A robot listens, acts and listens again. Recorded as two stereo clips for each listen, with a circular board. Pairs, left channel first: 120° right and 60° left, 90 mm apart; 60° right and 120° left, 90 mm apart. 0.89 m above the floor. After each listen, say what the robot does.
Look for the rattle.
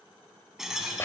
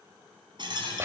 Turn 145° left.
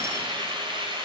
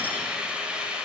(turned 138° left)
Turn 10° left.
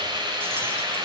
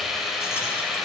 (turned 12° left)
Keep listening.
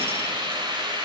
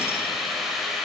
Facing where the rattle came from. I can't hear it now.